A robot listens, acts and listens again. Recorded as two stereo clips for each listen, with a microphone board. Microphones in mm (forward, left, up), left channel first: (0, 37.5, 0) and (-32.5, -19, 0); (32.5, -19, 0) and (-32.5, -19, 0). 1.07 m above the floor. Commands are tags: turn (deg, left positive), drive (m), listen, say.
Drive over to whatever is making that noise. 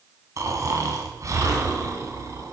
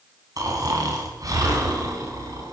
<turn deg="-155"/>
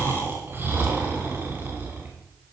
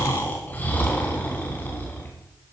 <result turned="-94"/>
<turn deg="-65"/>
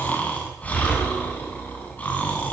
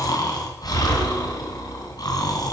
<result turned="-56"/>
<drive m="1.0"/>
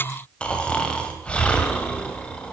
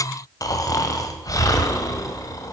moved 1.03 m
<turn deg="-10"/>
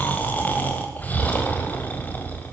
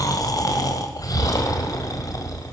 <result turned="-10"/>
<drive m="1.0"/>
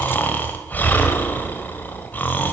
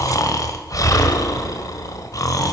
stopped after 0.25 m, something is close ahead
<say>I am next to the snoring.</say>